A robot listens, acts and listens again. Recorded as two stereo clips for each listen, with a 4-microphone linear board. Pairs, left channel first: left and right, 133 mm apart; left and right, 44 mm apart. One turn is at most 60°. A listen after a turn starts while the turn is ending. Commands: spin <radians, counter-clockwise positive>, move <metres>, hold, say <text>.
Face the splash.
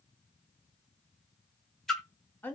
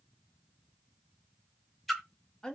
spin 0.52
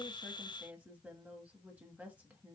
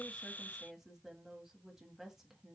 hold
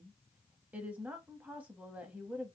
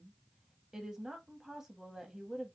say I heard a splash, but can't make it out now. It was about 30° right or 150° left.